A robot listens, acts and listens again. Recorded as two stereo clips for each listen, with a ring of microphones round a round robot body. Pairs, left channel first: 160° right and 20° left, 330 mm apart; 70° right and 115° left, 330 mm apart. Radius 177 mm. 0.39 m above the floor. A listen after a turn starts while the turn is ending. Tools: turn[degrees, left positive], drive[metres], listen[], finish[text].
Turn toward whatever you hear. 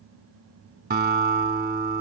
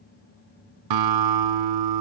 Thought: The guitar: 85° left.
Action: turn[85]
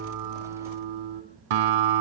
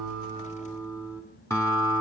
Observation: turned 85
Thought: The guitar is now 15° left.
Action: turn[15]
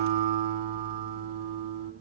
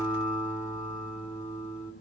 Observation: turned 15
Action: finish[Facing the guitar, 2 to 4 m away.]